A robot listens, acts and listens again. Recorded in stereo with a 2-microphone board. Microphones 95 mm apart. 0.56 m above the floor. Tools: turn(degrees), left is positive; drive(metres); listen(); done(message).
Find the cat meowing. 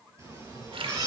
turn(degrees=-35)
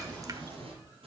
turn(degrees=-105)
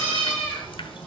turn(degrees=15)
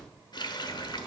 done("Found it: a cat meowing, straight ahead, over 4 m away.")